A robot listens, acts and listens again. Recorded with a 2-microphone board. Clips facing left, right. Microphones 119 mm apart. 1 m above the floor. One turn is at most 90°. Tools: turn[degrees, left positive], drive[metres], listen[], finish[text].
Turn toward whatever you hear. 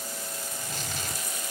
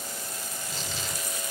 Thought: The tearing paper: about 50° left or 130° left.
Action: turn[50]
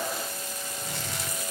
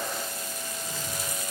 Thought: So it is at 80° left.
Action: turn[80]
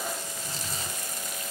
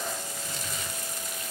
Thought: The tearing paper is now 35° left.
Action: turn[35]
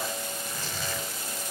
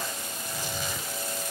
Thought: The tearing paper is now 15° right.
Action: turn[-15]
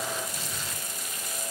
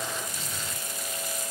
Action: finish[Facing the tearing paper, 2 to 4 m away.]